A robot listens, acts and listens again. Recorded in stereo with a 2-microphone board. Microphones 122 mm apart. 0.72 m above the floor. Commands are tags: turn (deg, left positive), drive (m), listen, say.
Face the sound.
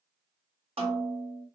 <turn deg="-50"/>
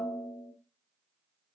<say>Facing the snare drum.</say>